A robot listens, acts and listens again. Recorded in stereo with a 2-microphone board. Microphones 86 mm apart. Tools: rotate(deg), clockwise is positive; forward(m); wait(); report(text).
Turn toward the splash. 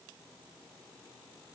wait()
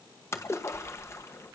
rotate(-30)
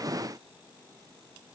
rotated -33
wait()
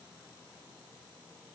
report("I heard a splash, but can't make it out now. It was about straight ahead or 115° left.")